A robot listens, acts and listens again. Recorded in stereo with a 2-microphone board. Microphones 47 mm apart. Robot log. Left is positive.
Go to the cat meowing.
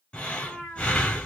note: The cat meowing: about 75° left or 105° left.
cmd yaw +75
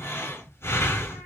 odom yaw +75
cmd idle
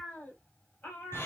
note: So it is at 35° left.
cmd yaw +35
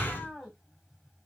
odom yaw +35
cmd fwd 1.0
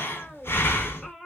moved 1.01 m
note: The cat meowing is now 10° left.
cmd yaw +10
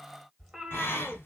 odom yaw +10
cmd fwd 1.0
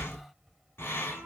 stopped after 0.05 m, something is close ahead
cmd idle
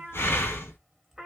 end: Arrived at the cat meowing, straight ahead.